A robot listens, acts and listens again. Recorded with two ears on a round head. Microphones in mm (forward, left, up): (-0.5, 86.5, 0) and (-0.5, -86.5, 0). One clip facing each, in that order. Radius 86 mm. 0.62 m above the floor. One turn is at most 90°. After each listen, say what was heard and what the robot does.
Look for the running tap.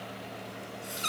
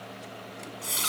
Turn 90° right.
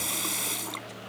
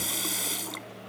Found it: a running tap, straight ahead.